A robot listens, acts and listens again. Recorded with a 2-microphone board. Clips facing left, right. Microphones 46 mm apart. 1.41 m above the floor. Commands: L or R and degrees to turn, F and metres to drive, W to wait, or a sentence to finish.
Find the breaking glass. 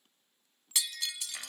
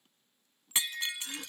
R30
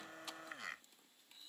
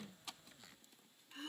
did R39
W
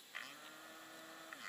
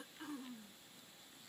I heard breaking glass, but can't make it out now. It was about 10° left or 110° right.